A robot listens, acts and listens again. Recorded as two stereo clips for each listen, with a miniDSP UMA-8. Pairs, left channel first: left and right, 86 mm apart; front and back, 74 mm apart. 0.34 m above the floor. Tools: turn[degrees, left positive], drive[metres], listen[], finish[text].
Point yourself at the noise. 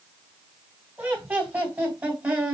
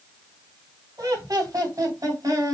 Thought: The laughter: 155° right.
Action: turn[-155]
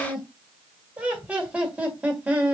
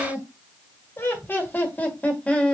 Thought: The laughter is now 45° right.
Action: turn[-45]
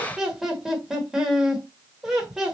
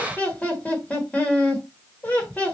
Thought: The laughter is now 15° right.
Action: turn[-15]
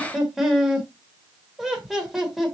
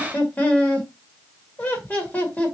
Action: finish[Found it: laughter, straight ahead, 1 to 2 m away.]